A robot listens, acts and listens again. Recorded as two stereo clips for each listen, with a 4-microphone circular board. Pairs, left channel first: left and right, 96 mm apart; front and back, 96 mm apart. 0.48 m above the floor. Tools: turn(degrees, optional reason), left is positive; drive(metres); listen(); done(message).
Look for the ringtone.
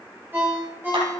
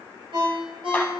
turn(degrees=-160, reason="The ringtone: 160° right.")
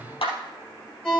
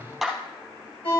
done("Facing the ringtone, over 4 m away.")